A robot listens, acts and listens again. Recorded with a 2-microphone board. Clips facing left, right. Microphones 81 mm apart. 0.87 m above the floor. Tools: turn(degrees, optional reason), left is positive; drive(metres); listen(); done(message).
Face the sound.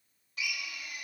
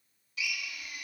turn(degrees=40, reason="The drill: about 40° left or 140° left.")
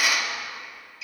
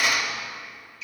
done("Facing the drill, 1 to 2 m away.")